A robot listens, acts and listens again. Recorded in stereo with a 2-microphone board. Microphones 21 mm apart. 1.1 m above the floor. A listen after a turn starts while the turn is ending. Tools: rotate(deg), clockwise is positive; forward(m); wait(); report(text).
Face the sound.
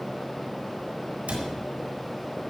rotate(90)
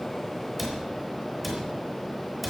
report("Facing the cupboard door, over 4 m away.")